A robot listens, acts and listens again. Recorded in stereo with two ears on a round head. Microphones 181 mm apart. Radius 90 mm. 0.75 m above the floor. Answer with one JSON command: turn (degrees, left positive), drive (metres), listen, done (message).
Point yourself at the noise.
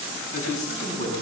{"turn": 40}
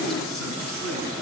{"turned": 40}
{"done": "Found it: a man speaking, straight ahead, over 4 m away."}